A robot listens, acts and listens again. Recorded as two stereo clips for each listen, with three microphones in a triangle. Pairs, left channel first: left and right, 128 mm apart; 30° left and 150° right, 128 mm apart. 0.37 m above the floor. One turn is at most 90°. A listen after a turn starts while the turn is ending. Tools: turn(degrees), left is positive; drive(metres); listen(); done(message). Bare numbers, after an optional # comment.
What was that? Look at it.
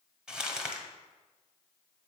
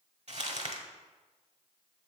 # The crumpling: 175° right.
turn(-90)
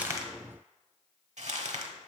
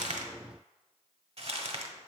# The crumpling is now 110° right.
turn(-90)
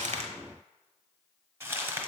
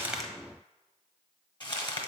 # The crumpling is now 25° right.
turn(-25)
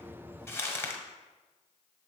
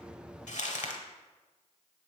# The crumpling is now 20° left.
turn(20)
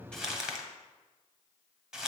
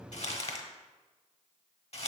done("Found it: crumpling, straight ahead, under 1 m away.")